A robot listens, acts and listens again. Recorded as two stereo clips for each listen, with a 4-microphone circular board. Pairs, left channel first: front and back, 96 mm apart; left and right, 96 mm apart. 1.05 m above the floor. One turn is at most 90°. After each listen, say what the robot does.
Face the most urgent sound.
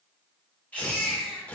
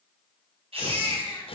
Turn 75° right.
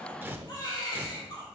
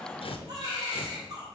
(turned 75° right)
Turn 40° right.
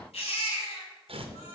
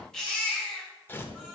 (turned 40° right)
Facing the baby crying.